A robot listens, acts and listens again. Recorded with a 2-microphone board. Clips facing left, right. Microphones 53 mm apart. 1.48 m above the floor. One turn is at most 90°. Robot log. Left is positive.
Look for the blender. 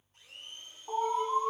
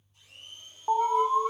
note: The blender: about 40° left or 140° left.
cmd yaw +40
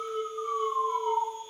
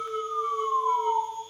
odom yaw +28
cmd idle
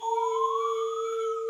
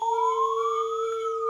cmd idle
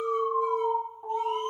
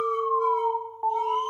end: I heard a blender, but can't make it out now. It was about 15° left or 110° left.